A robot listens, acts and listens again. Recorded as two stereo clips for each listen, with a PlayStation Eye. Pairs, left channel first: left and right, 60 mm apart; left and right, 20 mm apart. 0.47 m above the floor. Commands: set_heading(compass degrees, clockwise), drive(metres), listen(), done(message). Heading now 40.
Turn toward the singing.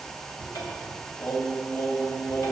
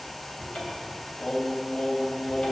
set_heading(345)
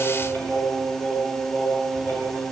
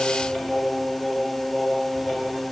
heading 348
set_heading(318)
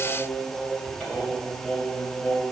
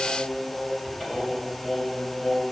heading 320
set_heading(305)
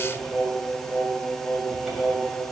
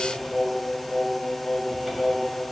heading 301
done("Facing the singing, 2 to 4 m away.")